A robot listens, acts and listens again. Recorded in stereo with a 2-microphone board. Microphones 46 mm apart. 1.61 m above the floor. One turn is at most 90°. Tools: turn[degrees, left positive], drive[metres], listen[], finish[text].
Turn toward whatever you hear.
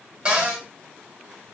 Thought: The cupboard door: about 20° right or 160° right.
Action: turn[-20]
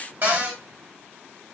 Thought: So it is at 140° right.
Action: turn[-90]
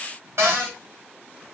Thought: The cupboard door is now 75° right.
Action: turn[-75]
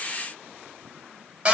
Thought: The cupboard door is now 30° right.
Action: turn[-30]
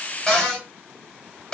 Thought: The cupboard door is now 15° left.
Action: turn[15]
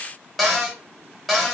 Action: finish[Facing the cupboard door.]